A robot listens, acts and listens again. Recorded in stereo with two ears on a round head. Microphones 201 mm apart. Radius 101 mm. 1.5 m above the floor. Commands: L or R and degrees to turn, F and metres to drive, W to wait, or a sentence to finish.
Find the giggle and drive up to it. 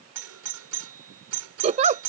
R30
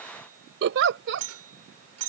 R115
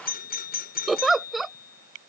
F1.0
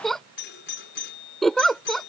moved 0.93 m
F1.0
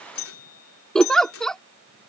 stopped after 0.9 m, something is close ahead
Arrived at the giggle, straight ahead.